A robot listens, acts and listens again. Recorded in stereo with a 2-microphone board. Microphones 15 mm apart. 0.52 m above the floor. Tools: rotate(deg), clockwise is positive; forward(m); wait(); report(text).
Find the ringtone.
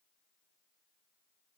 wait()
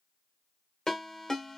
rotate(-55)
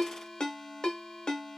rotate(-70)
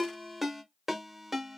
rotate(20)
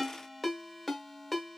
report("Facing the ringtone, 1 to 2 m away.")